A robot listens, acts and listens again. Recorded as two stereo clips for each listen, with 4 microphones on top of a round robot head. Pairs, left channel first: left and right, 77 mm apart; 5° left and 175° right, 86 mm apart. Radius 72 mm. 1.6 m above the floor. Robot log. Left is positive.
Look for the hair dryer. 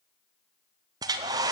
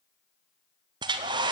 note: The hair dryer: 135° right.
cmd yaw -135
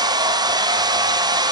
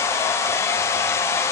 note: The hair dryer is now 60° right.
cmd yaw -60
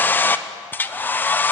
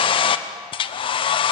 note: The hair dryer is now 25° left.
cmd yaw +25
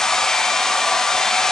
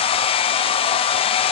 end: Facing the hair dryer.